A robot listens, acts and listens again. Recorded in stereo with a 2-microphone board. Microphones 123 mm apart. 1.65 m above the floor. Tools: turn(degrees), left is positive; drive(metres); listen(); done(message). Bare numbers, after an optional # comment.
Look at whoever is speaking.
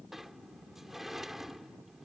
listen()
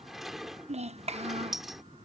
# The child speaking: about 65° right or 115° right.
turn(-65)
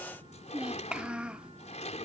# So it is at 10° right.
turn(-10)
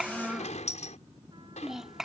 done("Facing the child speaking.")